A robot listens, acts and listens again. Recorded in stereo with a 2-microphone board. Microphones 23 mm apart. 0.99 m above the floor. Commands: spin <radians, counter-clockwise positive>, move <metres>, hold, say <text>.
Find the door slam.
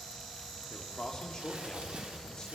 hold
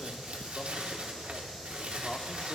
hold
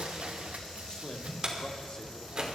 spin -0.61
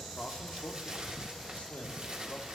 hold
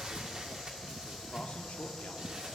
say I heard a door slam, but can't make it out now. It was about straight ahead or 110° right.